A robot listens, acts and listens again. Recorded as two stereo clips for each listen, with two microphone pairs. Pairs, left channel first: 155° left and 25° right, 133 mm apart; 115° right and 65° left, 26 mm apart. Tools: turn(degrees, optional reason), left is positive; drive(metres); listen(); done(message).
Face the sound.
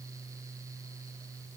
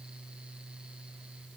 listen()
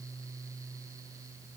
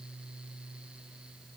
listen()
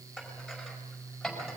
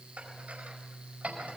turn(degrees=65, reason="The dishes clattering: 65° left.")
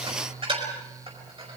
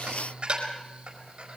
turn(degrees=20, reason="The dishes clattering is now 20° left.")
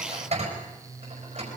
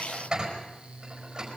done("Facing the dishes clattering.")